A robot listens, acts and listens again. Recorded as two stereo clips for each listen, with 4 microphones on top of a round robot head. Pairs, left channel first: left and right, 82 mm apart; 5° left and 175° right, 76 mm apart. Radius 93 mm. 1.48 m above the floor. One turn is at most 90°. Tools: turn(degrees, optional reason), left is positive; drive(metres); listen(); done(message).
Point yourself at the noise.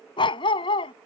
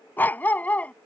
turn(degrees=75, reason="The dog barking: 75° left.")
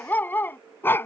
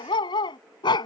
turn(degrees=25, reason="The dog barking is now 25° left.")
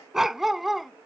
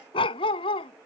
done("Facing the dog barking.")